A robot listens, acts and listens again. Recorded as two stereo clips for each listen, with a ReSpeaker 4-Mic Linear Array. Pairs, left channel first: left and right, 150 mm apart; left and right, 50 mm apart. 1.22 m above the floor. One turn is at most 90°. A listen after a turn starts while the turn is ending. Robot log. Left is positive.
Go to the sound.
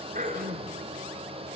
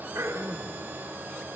note: The throat clearing: about 65° right or 115° right.
cmd yaw -65
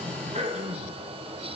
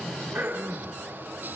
note: So it is at 50° right.
cmd yaw -50
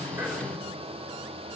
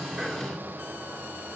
cmd idle
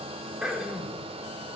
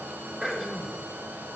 cmd fwd 1.0
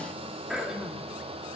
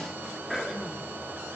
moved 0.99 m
cmd fwd 1.0
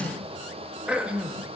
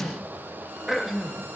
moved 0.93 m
cmd fwd 1.0
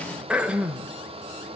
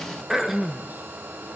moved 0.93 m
cmd fwd 1.0
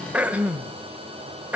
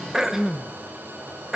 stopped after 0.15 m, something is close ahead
note: The throat clearing is now 10° right.
cmd yaw -10
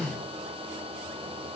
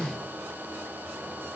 cmd idle
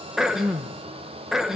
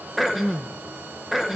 end: Arrived at the throat clearing, straight ahead.